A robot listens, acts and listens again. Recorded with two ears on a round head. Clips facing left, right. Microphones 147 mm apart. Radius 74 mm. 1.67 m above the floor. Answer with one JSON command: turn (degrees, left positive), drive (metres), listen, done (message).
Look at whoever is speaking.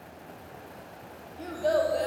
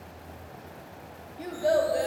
{"turn": -30}
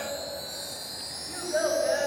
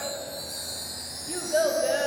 {"turn": -140}
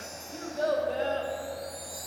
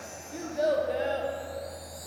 {"turn": -15}
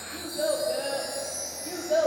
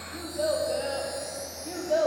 {"done": "Facing the child speaking."}